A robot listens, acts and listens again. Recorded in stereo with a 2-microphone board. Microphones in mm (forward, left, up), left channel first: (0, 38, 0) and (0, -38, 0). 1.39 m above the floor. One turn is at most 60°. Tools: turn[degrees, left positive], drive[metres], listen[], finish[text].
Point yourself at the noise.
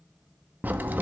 Thought: The crack: about 25° right or 155° right.
Action: turn[-25]
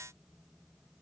Action: listen[]
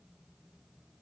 Action: finish[I heard a crack, but can't make it out now. It was about straight ahead or 130° right.]